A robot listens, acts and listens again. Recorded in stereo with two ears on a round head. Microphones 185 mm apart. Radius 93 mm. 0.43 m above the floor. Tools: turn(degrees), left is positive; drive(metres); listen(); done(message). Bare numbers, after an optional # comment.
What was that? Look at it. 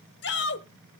# The shout: about 55° left or 125° left.
turn(55)
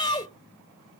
# So it is at 25° left.
turn(25)
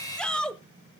done("Facing the shout, 1 to 2 m away.")